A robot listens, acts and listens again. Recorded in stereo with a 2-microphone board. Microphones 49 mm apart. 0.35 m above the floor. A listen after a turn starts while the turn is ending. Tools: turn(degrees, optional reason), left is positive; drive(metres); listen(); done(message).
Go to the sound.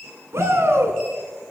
turn(degrees=-55, reason="The shout: about 55° right or 125° right.")
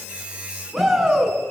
drive(metres=1.0)
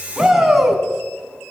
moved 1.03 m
drive(metres=1.0)
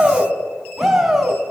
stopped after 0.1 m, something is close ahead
turn(degrees=-10, reason="The shout is now 10° right.")
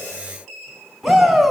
done("Blocked. The shout is further on, straight ahead.")